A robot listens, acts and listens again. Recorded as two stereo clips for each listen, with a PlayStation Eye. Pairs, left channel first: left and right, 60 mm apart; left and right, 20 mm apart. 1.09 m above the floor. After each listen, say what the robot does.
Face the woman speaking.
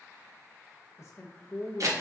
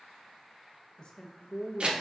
Turn 45° left.
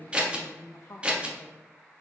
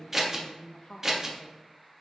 Turn 90° left.
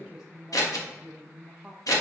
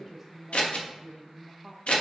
Found it: a woman speaking, straight ahead, under 1 m away.